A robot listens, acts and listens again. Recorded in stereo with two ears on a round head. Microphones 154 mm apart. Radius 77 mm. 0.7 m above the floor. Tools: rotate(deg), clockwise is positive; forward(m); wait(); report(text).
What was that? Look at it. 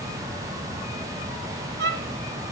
rotate(65)
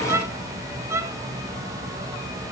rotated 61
rotate(15)
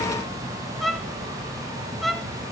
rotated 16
report("Facing the violin, 1 to 2 m away.")